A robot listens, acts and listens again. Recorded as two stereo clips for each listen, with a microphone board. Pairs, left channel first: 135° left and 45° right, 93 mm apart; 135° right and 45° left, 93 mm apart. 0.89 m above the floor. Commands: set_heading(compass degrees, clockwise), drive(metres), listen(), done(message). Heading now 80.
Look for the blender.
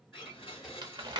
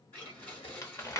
set_heading(285)
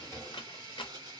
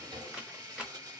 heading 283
done("Facing the blender, 1 to 2 m away.")